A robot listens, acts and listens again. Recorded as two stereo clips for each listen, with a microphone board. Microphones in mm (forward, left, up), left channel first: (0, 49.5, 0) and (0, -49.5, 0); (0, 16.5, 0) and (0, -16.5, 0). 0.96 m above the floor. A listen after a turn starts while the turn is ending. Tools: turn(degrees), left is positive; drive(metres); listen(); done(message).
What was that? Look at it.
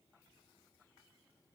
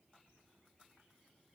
listen()
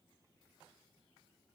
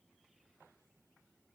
listen()
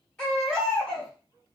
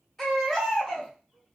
turn(degrees=30)
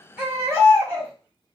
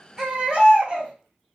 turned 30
turn(degrees=-25)
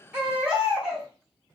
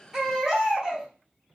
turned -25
turn(degrees=-10)
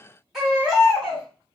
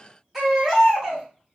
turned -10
done("Found it: a baby crying, straight ahead.")